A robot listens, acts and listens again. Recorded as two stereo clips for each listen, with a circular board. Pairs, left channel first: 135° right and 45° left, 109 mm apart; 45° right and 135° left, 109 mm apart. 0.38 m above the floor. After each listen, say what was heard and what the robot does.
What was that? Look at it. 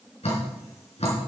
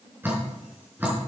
The dripping: 155° right. Turn 155° right.
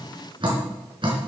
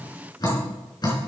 Found it: dripping, straight ahead.